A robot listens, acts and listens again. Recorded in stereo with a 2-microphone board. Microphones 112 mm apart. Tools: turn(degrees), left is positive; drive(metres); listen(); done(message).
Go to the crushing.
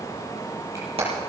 listen()
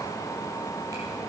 listen()
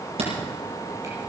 done("I can't make out crushing, only hammering.")